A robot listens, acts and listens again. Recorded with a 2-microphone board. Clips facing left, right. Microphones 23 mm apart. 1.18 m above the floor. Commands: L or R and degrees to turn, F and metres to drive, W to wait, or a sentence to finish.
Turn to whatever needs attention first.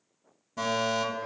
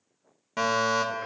R65
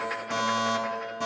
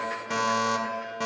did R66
R35
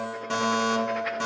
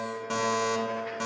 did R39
Facing the fire alarm.